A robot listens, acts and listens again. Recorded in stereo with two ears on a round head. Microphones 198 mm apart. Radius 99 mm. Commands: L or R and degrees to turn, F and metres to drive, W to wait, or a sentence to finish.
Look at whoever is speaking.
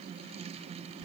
W
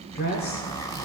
L45
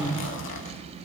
Facing the woman speaking, 1 to 2 m away.